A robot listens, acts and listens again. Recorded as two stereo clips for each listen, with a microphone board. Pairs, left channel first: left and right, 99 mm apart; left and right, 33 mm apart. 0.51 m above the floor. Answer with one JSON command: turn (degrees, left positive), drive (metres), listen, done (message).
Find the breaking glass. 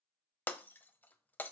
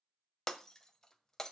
{"turn": 20}
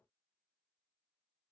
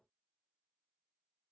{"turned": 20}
{"listen": true}
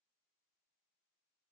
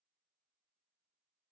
{"done": "I heard breaking glass, but can't make it out now. It was about straight ahead or 140° left."}